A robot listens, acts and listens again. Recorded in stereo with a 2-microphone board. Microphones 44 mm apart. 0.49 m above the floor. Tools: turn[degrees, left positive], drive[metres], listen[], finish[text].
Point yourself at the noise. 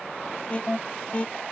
Thought: The alarm: about 30° left or 150° left.
Action: turn[30]
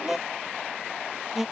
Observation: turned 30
Action: finish[Found it: an alarm, straight ahead.]